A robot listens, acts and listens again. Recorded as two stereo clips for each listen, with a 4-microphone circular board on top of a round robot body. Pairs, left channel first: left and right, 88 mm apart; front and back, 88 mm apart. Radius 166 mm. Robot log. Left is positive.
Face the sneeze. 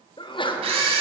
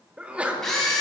note: The sneeze: 105° left.
cmd yaw +105
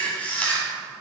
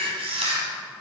end: I heard a sneeze from this way, but can't make it out now.